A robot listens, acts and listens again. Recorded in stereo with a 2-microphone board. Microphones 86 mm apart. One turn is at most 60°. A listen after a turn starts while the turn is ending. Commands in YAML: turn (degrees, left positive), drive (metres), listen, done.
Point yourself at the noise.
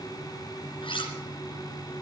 turn: 60
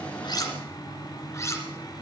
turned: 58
turn: 35
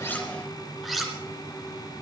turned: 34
done: "Found it: cutlery clinking, straight ahead."